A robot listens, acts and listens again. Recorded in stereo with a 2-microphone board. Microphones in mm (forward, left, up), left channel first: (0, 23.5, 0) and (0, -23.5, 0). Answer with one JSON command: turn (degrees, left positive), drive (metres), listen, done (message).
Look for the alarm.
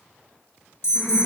{"turn": 65}
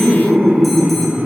{"listen": true}
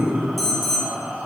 {"done": "Facing the alarm, 1 to 2 m away."}